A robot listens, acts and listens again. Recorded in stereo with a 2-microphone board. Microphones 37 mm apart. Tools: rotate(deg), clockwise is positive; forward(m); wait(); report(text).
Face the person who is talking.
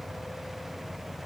wait()
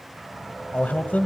rotate(-50)
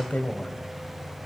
rotate(-65)
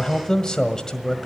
rotate(-25)
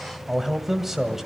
rotate(10)
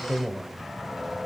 report("Found it: a man speaking, straight ahead.")